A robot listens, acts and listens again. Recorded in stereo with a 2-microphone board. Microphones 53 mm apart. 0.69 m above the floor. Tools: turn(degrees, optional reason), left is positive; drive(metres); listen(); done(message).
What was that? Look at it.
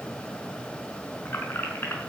turn(degrees=50, reason="The keys jangling: about 50° left or 130° left.")
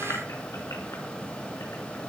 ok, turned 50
listen()
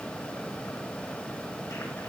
listen()
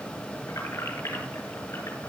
turn(degrees=75, reason="So it is at 75° left.")
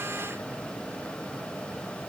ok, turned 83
turn(degrees=-10, reason="Nothing new. It was at 10° right.")
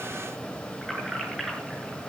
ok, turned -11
done("Found it: keys jangling, straight ahead, over 4 m away.")